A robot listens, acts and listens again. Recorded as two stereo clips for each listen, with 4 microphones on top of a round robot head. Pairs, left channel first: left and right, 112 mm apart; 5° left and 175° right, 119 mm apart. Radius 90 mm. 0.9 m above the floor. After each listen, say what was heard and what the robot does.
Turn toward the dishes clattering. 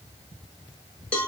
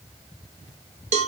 Keep listening.
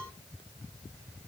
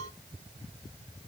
Keep listening.
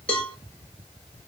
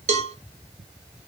I can't make out dishes clattering, only a cowbell.